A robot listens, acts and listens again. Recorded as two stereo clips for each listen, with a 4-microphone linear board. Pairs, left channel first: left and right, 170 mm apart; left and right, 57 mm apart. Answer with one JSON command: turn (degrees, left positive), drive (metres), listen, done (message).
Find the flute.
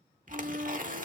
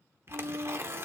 {"turn": -65}
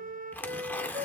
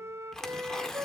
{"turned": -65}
{"turn": -55}
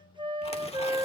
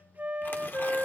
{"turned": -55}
{"turn": -30}
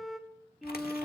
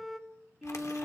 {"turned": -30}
{"done": "Found it: a flute, straight ahead, under 1 m away."}